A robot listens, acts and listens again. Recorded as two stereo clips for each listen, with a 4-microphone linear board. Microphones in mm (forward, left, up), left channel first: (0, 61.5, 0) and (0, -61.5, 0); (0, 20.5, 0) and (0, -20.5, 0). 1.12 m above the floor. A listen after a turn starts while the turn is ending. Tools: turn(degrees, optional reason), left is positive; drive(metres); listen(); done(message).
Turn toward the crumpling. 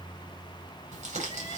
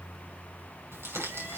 turn(degrees=-90)
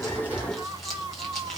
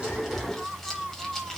listen()
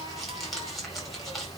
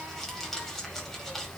done("Found it: crumpling, straight ahead, over 4 m away.")